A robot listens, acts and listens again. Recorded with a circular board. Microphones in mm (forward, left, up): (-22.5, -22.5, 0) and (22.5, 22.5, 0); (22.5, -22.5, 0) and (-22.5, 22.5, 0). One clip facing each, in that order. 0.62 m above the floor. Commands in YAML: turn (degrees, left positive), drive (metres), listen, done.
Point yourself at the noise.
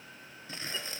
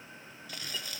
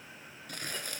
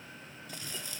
turn: -75
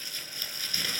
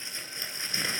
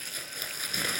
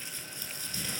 turn: -20
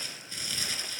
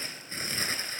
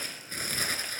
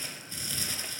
done: "Facing the crumpling, 2 to 4 m away."